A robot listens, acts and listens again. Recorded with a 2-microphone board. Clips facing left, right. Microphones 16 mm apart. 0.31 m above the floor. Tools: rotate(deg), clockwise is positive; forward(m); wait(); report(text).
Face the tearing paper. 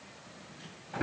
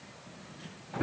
wait()
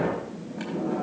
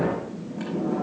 wait()
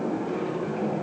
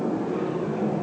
report("I can't make out tearing paper to turn to.")